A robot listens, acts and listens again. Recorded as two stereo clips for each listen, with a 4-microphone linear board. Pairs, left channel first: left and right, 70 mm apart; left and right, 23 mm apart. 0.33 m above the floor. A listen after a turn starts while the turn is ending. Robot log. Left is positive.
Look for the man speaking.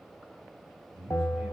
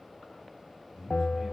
cmd yaw +30
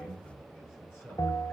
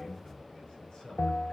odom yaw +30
note: So it is at 145° left.
cmd yaw +145
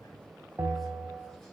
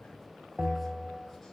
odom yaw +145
cmd idle
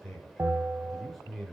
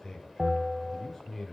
end: Facing the man speaking.